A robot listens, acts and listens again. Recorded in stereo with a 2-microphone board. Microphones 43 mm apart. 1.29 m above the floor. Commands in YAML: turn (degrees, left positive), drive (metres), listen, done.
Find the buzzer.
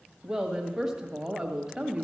listen: true
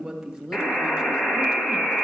turn: 50
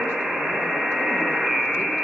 done: "Facing the buzzer."